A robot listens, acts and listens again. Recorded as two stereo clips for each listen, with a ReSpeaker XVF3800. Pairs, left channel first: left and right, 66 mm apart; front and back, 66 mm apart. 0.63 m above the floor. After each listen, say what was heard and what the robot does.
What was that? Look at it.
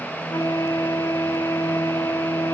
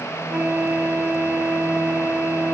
The flute: 115° left. Turn 115° left.
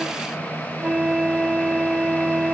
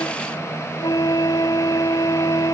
The flute is now 10° right. Turn 10° right.
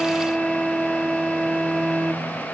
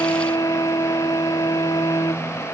Found it: a flute, straight ahead.